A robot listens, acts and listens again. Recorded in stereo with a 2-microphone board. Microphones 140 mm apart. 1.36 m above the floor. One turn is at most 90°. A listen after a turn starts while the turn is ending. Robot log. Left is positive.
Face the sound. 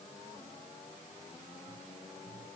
cmd idle
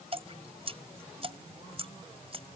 note: The dripping: about 40° right or 140° right.
cmd yaw -40
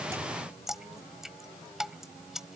end: Facing the dripping.